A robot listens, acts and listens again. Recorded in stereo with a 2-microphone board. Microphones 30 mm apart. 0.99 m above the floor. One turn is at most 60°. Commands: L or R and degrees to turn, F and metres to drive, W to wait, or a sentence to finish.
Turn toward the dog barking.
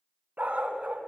R45
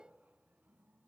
W
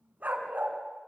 R60
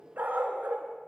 R60
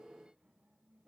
R15
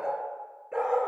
R30
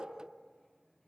W
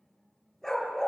L10
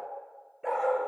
Found it: a dog barking, straight ahead, 2 to 4 m away.